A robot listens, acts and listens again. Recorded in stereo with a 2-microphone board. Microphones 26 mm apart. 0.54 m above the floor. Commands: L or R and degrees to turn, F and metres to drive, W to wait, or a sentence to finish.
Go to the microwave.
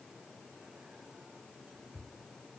W
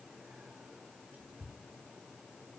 W
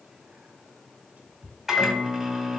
R30
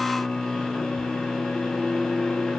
L25
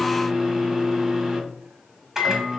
R15
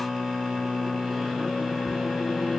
F1.0
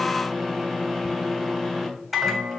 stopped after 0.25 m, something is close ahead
Something is in my way. I am facing the microwave but have not reached it.